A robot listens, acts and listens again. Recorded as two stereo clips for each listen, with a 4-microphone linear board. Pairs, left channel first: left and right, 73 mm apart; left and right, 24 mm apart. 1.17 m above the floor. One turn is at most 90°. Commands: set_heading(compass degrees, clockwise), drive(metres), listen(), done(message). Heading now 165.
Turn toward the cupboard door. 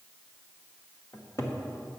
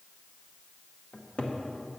set_heading(120)
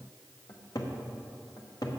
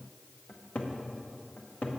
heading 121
set_heading(36)
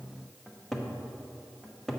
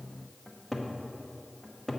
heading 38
done("Found it: a cupboard door, straight ahead.")